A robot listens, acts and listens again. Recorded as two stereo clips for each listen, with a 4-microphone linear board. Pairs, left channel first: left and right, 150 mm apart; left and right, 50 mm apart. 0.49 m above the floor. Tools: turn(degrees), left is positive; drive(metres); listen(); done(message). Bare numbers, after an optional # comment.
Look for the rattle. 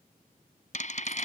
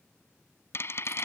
# The rattle: about 55° left or 125° left.
turn(55)
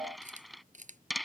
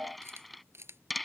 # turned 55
done("Found it: a rattle, straight ahead.")